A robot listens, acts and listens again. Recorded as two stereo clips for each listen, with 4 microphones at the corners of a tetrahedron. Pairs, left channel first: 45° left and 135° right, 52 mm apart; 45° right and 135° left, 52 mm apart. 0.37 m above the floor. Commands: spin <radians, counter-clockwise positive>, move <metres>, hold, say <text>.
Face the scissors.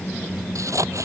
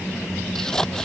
spin -2.18
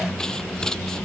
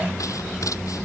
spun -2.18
spin -0.61
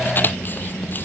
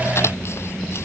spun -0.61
say Found it: scissors, straight ahead.